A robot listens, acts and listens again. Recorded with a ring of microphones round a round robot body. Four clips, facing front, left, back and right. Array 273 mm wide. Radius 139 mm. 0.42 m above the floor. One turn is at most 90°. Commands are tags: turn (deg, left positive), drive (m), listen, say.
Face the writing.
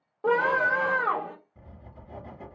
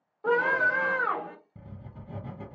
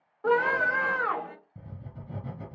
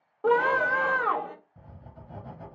<turn deg="90"/>
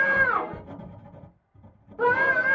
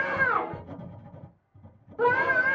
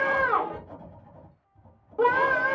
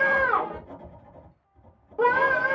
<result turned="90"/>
<turn deg="35"/>
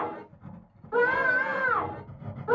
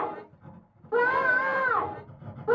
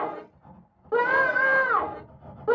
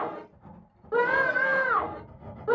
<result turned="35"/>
<say>Facing the writing.</say>